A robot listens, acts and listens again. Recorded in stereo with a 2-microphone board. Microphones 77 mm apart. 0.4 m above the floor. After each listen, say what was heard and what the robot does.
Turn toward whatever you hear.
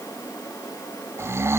The snoring: about 35° right or 145° right. Turn 35° right.
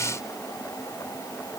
Keep listening.
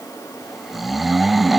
Found it: snoring, straight ahead.